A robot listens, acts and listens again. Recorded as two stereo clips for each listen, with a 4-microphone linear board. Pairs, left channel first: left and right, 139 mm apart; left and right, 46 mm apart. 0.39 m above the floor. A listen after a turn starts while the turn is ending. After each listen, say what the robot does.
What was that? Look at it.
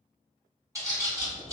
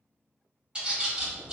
Turn 25° right.
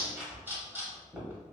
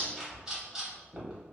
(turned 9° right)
Turn 30° right.
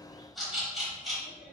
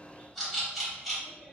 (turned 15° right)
Found it: a bird, straight ahead, 1 to 2 m away.